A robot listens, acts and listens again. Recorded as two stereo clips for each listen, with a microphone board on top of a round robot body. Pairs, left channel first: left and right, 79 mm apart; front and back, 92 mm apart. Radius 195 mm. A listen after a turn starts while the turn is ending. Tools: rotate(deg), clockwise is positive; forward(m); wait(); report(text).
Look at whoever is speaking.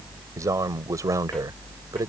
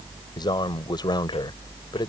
rotate(45)
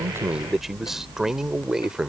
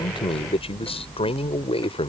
rotate(10)
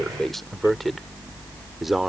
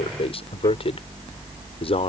report("Found it: a man speaking, straight ahead.")